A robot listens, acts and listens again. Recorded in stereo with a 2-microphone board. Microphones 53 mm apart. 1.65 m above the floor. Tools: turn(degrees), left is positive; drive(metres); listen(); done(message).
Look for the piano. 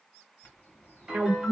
turn(degrees=-30)
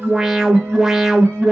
listen()
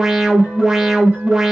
listen()
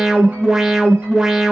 done("I heard a piano, but can't make it out now. It was about 25° left or 145° right.")